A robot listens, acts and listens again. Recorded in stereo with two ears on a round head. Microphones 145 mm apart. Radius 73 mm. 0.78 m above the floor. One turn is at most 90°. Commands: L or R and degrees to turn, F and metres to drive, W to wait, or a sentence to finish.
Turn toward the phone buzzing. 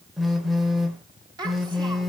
L30
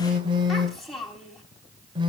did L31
R30
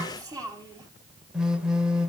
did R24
Facing the phone buzzing.